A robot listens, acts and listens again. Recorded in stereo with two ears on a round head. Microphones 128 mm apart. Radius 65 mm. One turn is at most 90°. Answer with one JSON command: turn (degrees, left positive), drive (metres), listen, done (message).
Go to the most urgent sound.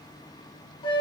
{"listen": true}
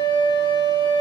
{"listen": true}
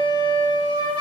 {"done": "I can't make out anything urgent to turn to."}